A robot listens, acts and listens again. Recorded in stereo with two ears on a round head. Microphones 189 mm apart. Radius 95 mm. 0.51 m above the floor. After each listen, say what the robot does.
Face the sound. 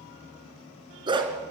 Turn 20° right.
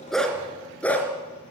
Turn 10° left.
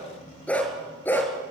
Turn 10° left.
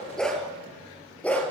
Facing the dog barking, over 4 m away.